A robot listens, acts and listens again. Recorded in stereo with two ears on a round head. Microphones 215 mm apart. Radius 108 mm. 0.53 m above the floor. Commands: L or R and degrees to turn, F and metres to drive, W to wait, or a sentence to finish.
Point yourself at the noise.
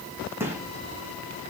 R30
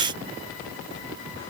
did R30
W
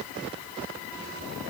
I heard a gunshot, but can't make it out now. It was about 20° left or 140° right.